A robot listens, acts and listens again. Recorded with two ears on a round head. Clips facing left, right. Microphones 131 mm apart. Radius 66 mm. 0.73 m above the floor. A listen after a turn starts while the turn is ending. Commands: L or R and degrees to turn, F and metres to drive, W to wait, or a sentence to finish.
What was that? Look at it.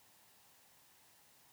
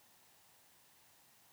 W
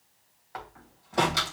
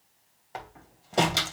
R30
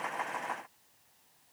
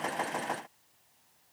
W
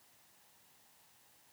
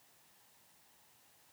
I heard a door slam, but can't make it out now. It was about straight ahead or 120° right.